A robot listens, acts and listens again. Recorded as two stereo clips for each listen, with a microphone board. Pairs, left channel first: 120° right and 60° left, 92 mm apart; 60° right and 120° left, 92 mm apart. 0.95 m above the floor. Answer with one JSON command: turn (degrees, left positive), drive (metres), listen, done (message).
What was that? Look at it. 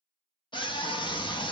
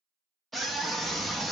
{"turn": -150}
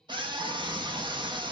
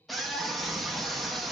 {"turn": 30}
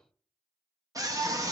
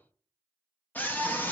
{"turn": 10}
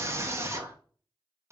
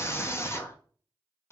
{"done": "Found it: a scream, straight ahead, under 1 m away."}